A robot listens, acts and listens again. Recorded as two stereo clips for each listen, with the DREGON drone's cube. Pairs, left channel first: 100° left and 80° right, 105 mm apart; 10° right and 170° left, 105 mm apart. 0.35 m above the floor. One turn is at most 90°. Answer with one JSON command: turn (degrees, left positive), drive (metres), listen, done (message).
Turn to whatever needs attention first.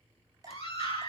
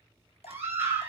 {"turn": 90}
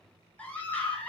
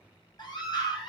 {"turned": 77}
{"turn": 25}
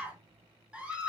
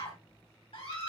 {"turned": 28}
{"done": "Found it: a scream, straight ahead, 2 to 4 m away."}